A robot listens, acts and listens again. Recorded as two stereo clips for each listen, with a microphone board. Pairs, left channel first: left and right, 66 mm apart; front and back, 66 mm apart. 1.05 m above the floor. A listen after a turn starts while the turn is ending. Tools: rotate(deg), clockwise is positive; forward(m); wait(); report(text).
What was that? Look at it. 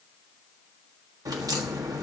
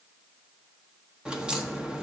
rotate(105)
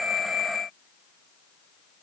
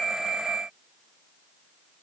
report("Facing where the crack came from. I can't hear it now.")